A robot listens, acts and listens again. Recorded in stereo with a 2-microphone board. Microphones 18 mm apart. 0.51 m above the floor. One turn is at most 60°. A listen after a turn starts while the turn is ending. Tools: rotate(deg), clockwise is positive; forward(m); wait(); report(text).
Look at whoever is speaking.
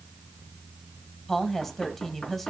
rotate(-15)
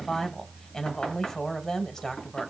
rotate(-60)
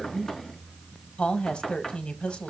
rotate(-60)
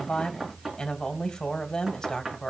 rotate(-45)
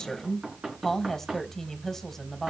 rotate(-20)
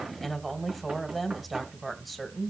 report("Found it: a woman speaking, straight ahead, 2 to 4 m away.")